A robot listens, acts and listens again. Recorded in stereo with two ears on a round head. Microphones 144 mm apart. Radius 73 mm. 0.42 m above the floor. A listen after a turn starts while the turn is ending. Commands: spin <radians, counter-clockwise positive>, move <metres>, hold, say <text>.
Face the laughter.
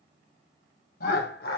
spin 1.22
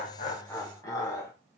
spin 0.35
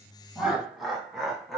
say Facing the laughter, 2 to 4 m away.